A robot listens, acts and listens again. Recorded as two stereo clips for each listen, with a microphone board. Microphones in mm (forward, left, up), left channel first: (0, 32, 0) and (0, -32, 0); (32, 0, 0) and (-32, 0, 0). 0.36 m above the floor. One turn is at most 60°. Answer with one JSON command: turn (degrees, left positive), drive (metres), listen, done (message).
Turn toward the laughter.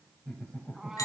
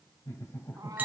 {"turn": 20}
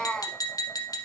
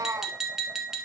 {"listen": true}
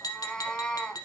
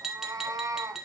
{"listen": true}
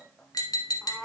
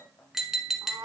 {"done": "I heard laughter from this way, but can't make it out now."}